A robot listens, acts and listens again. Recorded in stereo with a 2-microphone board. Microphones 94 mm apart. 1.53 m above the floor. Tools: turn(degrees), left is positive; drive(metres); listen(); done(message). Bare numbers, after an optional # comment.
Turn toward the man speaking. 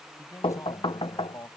# The man speaking: about 35° left or 145° left.
turn(35)
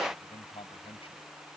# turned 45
# So it is at 95° left.
turn(95)
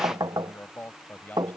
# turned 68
# The man speaking is now 20° left.
turn(20)
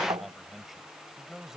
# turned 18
done("Found it: a man speaking, straight ahead.")